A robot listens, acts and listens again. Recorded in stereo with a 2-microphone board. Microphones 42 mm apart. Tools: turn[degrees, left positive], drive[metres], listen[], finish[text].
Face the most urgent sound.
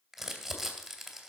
Action: listen[]
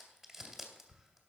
Action: listen[]
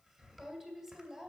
Action: finish[I can't make out anything urgent to turn to.]